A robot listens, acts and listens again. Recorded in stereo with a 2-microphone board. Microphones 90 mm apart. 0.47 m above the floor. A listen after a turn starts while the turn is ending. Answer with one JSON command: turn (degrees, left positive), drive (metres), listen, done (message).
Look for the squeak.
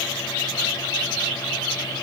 {"listen": true}
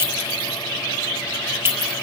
{"listen": true}
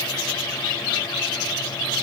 {"done": "I can't make out a squeak to turn to."}